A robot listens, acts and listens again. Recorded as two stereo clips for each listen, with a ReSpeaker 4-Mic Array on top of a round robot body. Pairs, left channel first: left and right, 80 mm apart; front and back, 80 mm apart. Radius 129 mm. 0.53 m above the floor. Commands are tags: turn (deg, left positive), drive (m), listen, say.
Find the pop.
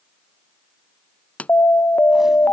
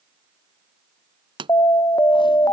<turn deg="165"/>
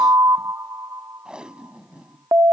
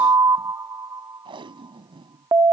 <say>I heard a pop from this way, but can't make it out now.</say>